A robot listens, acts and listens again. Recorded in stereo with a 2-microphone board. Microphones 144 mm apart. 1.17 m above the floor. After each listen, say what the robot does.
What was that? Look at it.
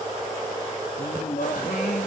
Turn 90° left.
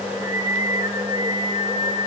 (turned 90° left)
Turn 40° right.
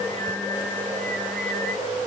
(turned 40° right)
Facing the singing.